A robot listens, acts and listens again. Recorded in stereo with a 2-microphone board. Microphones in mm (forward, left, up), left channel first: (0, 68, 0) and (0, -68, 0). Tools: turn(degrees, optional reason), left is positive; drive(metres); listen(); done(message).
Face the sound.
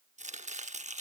turn(degrees=-60, reason="The chopping: about 60° right or 120° right.")
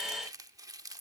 turn(degrees=-30, reason="So it is at 30° right.")
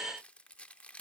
turn(degrees=10, reason="The chopping is now 10° left.")
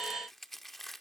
done("Found it: chopping, straight ahead.")